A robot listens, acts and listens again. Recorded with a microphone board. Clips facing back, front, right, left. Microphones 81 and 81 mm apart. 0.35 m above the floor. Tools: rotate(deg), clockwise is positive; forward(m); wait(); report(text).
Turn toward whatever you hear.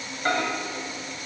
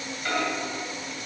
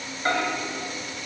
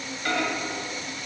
rotate(140)
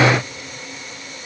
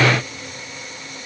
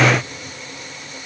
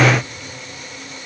wait()
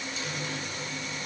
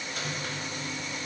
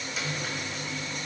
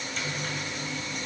wait()
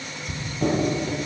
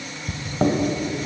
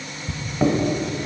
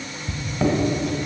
rotate(10)
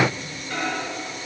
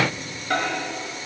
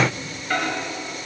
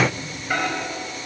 report("Facing the microwave.")